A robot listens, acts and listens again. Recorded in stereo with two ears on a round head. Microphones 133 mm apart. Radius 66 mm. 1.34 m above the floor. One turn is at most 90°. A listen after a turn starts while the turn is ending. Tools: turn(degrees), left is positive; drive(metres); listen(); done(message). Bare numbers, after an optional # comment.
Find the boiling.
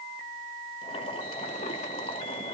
# The boiling: about 40° left or 140° left.
turn(40)
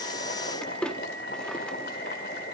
# So it is at 95° left.
turn(90)
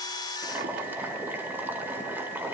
# The boiling is now 15° right.
turn(-15)
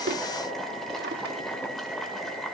done("Facing the boiling, over 4 m away.")